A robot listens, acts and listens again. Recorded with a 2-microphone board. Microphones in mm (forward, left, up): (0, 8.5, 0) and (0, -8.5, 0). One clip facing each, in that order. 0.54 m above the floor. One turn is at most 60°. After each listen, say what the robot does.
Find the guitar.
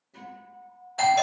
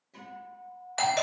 Turn 15° right.
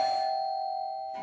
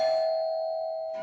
Keep listening.
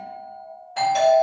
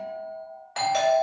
Turn 60° right.
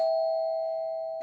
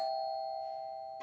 Turn 60° right.
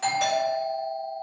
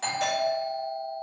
Turn 30° right.
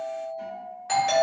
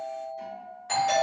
Turn 45° right.
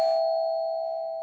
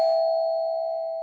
Keep listening.
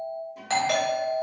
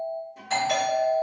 Found it: a guitar, straight ahead, 1 to 2 m away.